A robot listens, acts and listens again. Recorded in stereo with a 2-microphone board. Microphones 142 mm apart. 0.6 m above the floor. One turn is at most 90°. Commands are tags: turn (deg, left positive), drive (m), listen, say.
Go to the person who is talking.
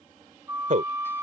<turn deg="-65"/>
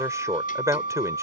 <turn deg="-25"/>
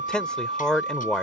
<drive m="1.0"/>
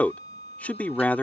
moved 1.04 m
<turn deg="15"/>
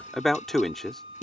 <drive m="1.0"/>
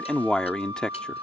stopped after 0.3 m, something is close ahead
<turn deg="10"/>
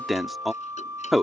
<say>I am next to the man speaking.</say>